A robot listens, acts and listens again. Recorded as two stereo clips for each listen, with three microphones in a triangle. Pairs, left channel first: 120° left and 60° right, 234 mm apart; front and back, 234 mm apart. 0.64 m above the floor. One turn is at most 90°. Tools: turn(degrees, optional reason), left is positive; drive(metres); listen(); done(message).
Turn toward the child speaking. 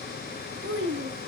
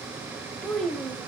turn(degrees=-90, reason="The child speaking: 90° right.")
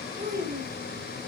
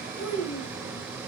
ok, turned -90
turn(degrees=-10, reason="The child speaking is now 10° right.")
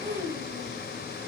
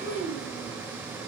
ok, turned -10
turn(degrees=-15, reason="The child speaking is now 15° right.")
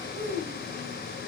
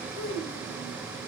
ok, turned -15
turn(degrees=-10, reason="The child speaking is now 10° right.")
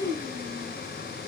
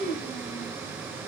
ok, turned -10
turn(degrees=-10, reason="The child speaking is now 10° right.")
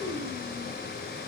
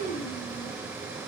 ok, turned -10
turn(degrees=-10, reason="The child speaking is now 10° right.")
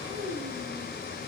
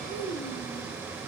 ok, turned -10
done("Facing the child speaking.")